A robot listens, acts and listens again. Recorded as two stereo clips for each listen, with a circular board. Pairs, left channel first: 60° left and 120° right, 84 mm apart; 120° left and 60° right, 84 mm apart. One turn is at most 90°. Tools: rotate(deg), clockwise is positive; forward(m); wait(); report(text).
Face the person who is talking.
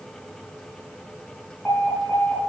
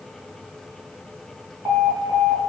wait()
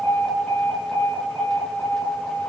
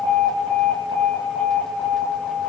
wait()
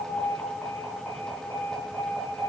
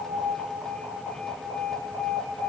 report("I can't make out anyone speaking to turn to.")